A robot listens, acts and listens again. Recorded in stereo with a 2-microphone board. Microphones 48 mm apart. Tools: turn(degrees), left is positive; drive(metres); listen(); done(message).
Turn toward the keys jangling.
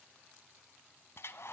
listen()
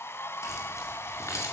turn(degrees=90)
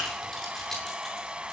listen()
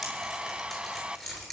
done("Found it: keys jangling, straight ahead.")